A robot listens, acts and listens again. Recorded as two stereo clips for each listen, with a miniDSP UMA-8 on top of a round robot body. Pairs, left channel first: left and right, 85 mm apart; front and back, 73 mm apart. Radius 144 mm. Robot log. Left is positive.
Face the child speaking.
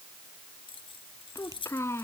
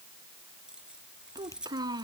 note: The child speaking: 150° left.
cmd yaw +150
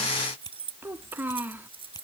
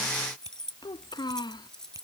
note: The child speaking is now 20° right.
cmd yaw -20
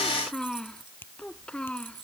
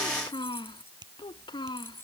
note: The child speaking is now 10° left.
cmd yaw +10
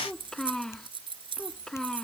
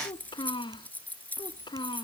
end: Found it: a child speaking, straight ahead.